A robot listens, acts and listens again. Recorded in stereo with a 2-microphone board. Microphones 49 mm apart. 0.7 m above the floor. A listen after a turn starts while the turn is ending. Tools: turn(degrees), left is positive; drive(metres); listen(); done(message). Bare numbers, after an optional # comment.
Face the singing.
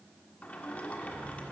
listen()
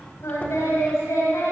turn(90)
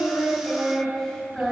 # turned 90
# So it is at 10° left.
turn(10)
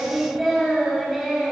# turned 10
done("Found it: singing, straight ahead, over 4 m away.")